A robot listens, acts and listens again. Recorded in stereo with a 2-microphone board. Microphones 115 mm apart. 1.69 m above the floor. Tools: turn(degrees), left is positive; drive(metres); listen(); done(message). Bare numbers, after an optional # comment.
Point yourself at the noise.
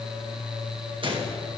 # The gunshot: about 45° right or 135° right.
turn(-45)
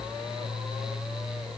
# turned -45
listen()
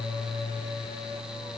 done("I heard a gunshot, but can't make it out now. It was about straight ahead or 90° right.")